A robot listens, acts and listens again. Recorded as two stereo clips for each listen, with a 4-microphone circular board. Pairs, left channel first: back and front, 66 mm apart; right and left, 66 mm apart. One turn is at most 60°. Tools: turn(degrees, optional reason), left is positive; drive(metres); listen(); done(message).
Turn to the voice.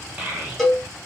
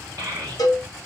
turn(degrees=55, reason="The child speaking: 55° left.")
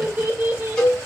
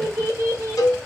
turn(degrees=45, reason="The child speaking is now 45° left.")
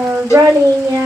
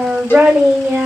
done("Found it: a child speaking, straight ahead.")